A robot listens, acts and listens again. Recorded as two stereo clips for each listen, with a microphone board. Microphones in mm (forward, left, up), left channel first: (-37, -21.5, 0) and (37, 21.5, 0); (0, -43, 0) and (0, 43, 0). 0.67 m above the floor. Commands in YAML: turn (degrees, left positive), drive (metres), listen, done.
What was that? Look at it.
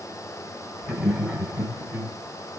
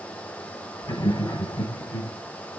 turn: -50
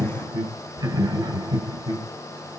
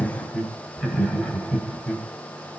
done: "Found it: laughter, straight ahead, 2 to 4 m away."